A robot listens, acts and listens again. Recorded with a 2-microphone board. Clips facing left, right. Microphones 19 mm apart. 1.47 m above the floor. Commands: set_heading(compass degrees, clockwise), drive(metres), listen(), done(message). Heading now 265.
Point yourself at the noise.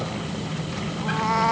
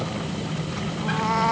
set_heading(235)
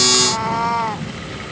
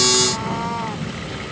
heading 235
set_heading(80)
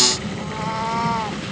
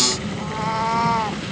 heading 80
done("Found it: a cat meowing, straight ahead.")